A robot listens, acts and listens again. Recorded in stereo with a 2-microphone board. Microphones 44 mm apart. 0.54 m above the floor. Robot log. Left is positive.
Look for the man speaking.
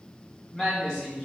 cmd yaw +30
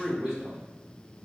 note: So it is at 15° right.
cmd yaw -15
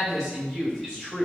end: Found it: a man speaking, straight ahead.